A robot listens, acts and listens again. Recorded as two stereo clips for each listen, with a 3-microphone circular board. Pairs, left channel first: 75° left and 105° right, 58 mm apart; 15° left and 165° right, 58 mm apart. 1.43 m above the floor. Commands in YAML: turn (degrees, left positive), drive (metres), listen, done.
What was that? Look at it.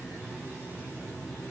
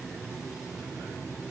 listen: true
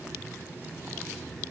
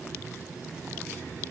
listen: true
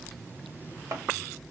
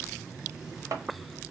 turn: -135
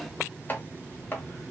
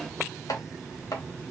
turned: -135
turn: 15
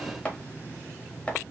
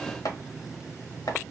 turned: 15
done: "Found it: chopping, straight ahead, under 1 m away."